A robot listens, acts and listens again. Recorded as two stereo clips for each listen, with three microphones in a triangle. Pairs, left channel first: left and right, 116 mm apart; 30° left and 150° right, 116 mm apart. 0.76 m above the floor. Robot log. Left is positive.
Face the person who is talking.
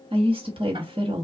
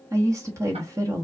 note: The woman speaking: 95° right.
cmd yaw -95
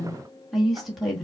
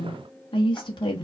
end: Found it: a woman speaking, straight ahead, 1 to 2 m away.